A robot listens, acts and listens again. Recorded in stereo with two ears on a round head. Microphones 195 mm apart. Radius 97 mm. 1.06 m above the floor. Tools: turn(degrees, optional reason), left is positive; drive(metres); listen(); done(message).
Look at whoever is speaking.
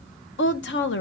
turn(degrees=60, reason="The woman speaking: about 60° left or 120° left.")
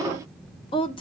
turn(degrees=30, reason="So it is at 30° left.")
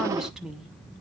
done("Found it: a woman speaking, straight ahead, under 1 m away.")